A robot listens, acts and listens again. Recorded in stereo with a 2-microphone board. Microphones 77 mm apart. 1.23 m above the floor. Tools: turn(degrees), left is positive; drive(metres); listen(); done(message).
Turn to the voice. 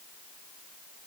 listen()
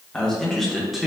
turn(degrees=-30)
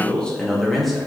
turn(degrees=-30)
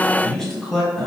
turn(degrees=30)
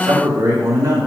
turn(degrees=-45)
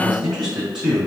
turn(degrees=-10)
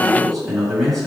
done("Facing the man speaking, 2 to 4 m away.")